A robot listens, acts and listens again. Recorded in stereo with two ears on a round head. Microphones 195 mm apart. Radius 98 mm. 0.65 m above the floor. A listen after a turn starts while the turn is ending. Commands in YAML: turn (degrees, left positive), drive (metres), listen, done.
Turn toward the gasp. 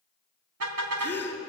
turn: 30
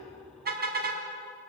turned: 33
listen: true
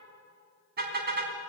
done: "I heard a gasp, but can't make it out now. It was about 20° right or 135° left."